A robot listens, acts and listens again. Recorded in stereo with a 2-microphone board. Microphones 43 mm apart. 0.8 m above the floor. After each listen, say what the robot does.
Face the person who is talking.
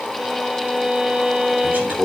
Turn 50° right.
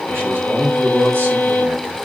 Turn 75° right.
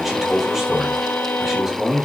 Facing the man speaking, 2 to 4 m away.